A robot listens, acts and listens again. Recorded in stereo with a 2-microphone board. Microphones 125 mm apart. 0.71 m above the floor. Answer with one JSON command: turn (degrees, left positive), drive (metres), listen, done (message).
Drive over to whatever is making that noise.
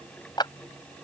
{"turn": 35}
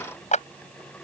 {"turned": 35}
{"turn": 105}
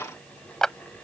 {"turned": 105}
{"drive": 1.0}
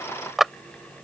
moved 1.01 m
{"drive": 1.0}
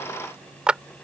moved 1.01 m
{"turn": -10}
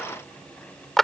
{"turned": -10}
{"drive": 1.0}
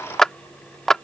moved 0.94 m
{"drive": 1.0}
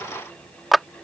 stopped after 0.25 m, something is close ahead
{"done": "Arrived at the clap, straight ahead."}